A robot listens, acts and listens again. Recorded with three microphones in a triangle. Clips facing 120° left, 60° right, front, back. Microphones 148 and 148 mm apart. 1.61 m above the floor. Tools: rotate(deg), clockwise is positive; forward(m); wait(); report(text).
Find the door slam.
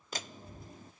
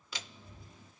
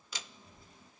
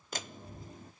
rotate(-155)
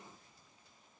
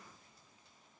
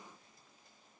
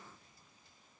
report("I heard a door slam from this way, but can't make it out now.")